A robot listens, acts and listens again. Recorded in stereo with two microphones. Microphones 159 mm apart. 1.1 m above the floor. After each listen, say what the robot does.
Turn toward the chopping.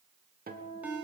Keep listening.
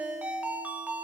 Keep listening.
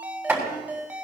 Turn 30° right.
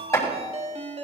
Turn 20° left.
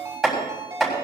Found it: chopping, straight ahead.